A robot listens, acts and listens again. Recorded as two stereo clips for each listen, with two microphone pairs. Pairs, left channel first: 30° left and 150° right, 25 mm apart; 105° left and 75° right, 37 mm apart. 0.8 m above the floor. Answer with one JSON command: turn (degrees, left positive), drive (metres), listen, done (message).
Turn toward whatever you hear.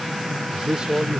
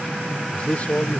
{"turn": 160}
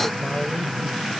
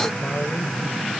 {"listen": true}
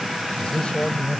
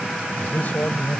{"turn": 70}
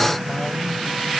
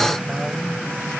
{"listen": true}
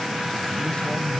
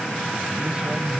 {"listen": true}
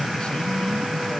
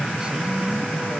{"done": "Facing where the man speaking came from. I can't hear it now."}